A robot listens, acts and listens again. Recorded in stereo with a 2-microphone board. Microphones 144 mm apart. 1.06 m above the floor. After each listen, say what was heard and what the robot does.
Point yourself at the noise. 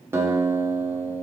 The guitar: about 20° right or 160° right. Turn 20° right.
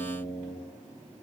So it is at 140° right. Turn 140° right.
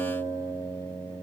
The guitar is now 20° right. Turn 20° right.
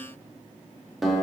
Facing the guitar.